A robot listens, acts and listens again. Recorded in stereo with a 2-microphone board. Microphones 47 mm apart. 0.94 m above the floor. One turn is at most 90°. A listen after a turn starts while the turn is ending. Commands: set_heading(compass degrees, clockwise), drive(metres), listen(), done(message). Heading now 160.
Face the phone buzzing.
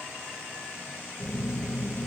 set_heading(220)
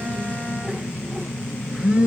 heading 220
set_heading(245)
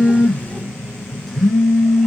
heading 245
done("Found it: a phone buzzing, straight ahead.")